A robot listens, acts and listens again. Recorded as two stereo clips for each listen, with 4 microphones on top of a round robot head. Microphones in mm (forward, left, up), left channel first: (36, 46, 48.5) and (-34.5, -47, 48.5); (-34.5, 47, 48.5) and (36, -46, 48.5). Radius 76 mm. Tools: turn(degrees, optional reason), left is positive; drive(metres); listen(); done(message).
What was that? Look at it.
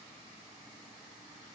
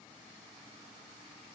listen()
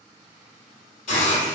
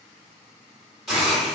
turn(degrees=35, reason="The hiss: 35° left.")
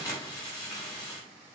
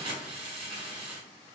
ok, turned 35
turn(degrees=-10, reason="The hiss is now 10° right.")
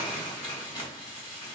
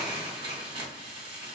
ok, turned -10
done("Found it: a hiss, straight ahead, 1 to 2 m away.")